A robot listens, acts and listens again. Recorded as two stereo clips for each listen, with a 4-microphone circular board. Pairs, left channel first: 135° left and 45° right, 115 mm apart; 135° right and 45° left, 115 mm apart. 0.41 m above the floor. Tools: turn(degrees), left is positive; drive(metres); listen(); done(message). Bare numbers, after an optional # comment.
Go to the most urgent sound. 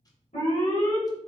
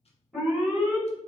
# The alarm: 135° left.
turn(135)
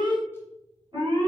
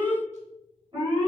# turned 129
# The alarm is now 10° left.
turn(10)
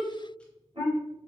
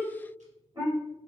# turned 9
drive(1.0)
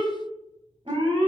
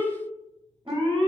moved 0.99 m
drive(1.0)
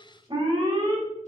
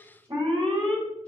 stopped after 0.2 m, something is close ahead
done("Arrived at the alarm, straight ahead.")